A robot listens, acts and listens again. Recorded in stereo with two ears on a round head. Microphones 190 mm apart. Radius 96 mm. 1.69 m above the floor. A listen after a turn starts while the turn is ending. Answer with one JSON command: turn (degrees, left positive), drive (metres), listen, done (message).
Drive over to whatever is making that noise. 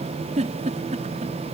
{"turn": -35}
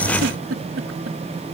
{"turn": -110}
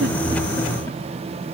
{"listen": true}
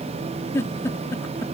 {"turn": 15}
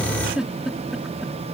{"drive": 1.0}
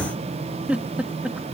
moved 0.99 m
{"drive": 1.0}
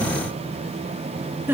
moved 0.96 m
{"turn": -10}
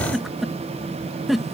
{"drive": 1.0}
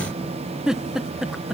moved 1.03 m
{"drive": 1.0}
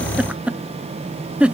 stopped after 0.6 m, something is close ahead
{"done": "I am next to the giggle."}